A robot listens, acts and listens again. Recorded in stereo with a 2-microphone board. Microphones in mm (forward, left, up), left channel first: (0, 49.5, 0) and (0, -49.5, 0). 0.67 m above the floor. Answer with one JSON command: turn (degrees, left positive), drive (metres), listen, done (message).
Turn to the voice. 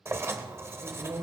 {"turn": -75}
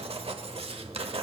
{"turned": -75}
{"listen": true}
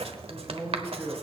{"turn": -30}
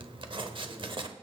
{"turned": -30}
{"listen": true}
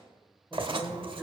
{"done": "Found it: a man speaking, straight ahead."}